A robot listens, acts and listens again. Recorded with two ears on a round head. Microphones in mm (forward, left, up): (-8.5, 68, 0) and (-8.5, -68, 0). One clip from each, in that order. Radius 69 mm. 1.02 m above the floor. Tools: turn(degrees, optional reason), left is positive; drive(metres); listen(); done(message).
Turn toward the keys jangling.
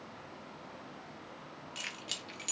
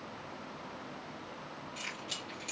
turn(degrees=55, reason="The keys jangling: about 55° left or 125° left.")
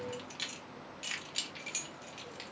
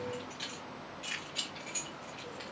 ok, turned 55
turn(degrees=85, reason="So it is at 85° left.")
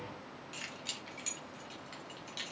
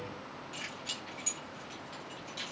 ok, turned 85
turn(degrees=20, reason="The keys jangling is now 20° left.")
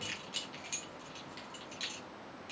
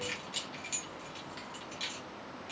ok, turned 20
done("Facing the keys jangling, 2 to 4 m away.")